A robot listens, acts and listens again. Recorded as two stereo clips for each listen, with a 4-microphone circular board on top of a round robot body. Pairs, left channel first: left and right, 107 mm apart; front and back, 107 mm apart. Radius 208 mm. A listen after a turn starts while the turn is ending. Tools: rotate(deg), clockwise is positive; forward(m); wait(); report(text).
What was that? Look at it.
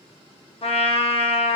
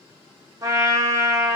rotate(-120)
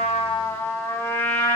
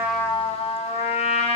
rotate(-25)
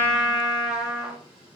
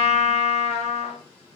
report("Facing the trumpet.")